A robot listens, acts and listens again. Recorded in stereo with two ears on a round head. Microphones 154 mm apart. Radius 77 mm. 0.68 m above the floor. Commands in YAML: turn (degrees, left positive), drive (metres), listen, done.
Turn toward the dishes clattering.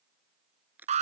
listen: true
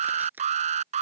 listen: true
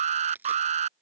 done: "I can't make out dishes clattering, only an alarm and crushing."